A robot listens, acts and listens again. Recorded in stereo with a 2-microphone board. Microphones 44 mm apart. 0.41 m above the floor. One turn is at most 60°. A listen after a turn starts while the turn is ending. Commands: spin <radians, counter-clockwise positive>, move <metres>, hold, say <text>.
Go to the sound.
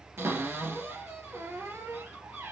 spin -1.05
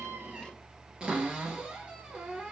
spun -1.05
spin -0.35
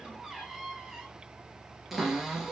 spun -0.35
move 1.0
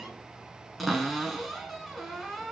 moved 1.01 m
move 1.0
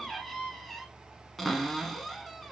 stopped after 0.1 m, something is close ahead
say I am next to the cupboard door.